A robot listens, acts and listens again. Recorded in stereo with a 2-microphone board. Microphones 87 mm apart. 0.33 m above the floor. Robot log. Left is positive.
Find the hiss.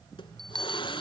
note: The hiss: about 70° left or 110° left.
cmd yaw +70
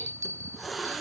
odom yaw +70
end: Found it: a hiss, straight ahead, 1 to 2 m away.